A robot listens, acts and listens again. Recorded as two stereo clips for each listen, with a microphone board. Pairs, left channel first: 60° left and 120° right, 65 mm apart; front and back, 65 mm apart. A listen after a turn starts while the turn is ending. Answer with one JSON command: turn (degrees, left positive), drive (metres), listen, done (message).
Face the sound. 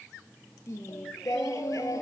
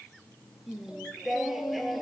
{"turn": 90}
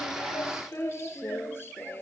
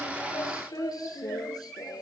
{"done": "Facing the singing."}